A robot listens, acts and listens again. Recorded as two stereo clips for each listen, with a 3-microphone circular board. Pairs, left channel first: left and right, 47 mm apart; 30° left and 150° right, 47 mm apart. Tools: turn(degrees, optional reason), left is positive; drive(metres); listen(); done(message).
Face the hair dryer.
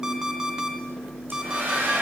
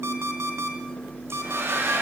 turn(degrees=-130, reason="The hair dryer: 130° right.")
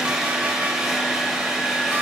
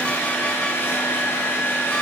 done("Facing the hair dryer.")